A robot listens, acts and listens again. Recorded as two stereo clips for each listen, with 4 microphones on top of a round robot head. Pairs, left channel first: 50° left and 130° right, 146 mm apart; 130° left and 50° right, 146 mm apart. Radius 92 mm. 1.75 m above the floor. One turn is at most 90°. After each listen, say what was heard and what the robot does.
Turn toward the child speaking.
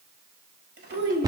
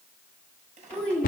The child speaking: 150° right. Turn 90° right.
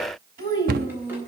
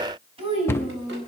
The child speaking is now 100° right. Turn 90° right.
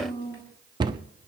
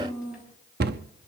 The child speaking is now 10° right. Turn 10° right.
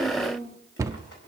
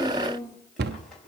Facing the child speaking, over 4 m away.